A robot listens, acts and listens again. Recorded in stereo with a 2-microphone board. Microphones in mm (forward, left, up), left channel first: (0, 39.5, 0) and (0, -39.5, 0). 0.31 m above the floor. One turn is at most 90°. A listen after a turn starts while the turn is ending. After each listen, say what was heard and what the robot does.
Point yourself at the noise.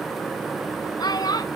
The child speaking: about 60° left or 120° left. Turn 60° left.
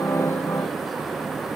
Keep listening.
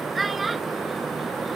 Facing the child speaking.